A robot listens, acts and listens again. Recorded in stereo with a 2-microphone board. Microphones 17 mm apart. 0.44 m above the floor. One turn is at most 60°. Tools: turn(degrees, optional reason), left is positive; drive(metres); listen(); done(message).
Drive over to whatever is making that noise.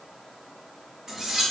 turn(degrees=-35, reason="The cutlery clinking: about 35° right or 145° right.")
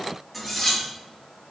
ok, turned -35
drive(metres=1.0)
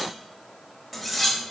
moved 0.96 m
drive(metres=1.0)
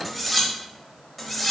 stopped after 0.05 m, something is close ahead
turn(degrees=10, reason="The cutlery clinking is now 10° left.")
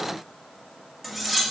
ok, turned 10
done("Arrived at the cutlery clinking, straight ahead.")